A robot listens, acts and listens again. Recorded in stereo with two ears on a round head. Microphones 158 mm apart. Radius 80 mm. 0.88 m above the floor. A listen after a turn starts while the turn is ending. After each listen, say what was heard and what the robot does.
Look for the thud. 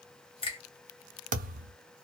The thud: about 50° right or 130° right. Turn 50° right.
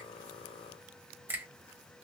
Keep listening.
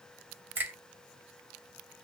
I heard a thud, but can't make it out now. It was about straight ahead or 80° right.